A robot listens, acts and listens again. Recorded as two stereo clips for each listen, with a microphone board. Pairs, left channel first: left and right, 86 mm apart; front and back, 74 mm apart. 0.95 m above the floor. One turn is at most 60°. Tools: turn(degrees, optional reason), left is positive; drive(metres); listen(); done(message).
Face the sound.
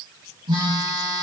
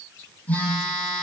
turn(degrees=-60, reason="The phone buzzing: 65° right.")
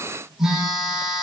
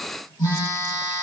done("Facing the phone buzzing.")